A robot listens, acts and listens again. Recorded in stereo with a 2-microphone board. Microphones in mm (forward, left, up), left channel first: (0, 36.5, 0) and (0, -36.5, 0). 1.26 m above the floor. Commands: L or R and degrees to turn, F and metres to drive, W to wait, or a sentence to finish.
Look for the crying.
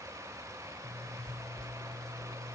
W
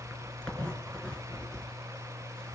W
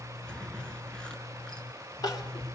L60
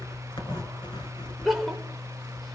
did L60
Found it: crying, straight ahead.